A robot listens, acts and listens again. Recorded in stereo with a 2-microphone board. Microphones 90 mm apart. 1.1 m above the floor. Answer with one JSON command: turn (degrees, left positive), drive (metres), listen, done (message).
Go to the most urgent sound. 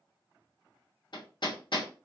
{"listen": true}
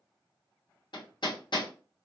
{"listen": true}
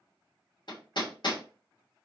{"done": "I can't make out anything urgent, only hammering."}